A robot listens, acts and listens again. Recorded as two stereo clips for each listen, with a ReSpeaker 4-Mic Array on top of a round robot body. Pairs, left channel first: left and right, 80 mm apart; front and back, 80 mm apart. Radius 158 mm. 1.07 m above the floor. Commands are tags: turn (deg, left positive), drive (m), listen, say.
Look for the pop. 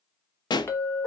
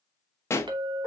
<turn deg="60"/>
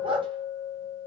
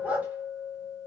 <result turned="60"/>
<say>Facing where the pop came from. I can't hear it now.</say>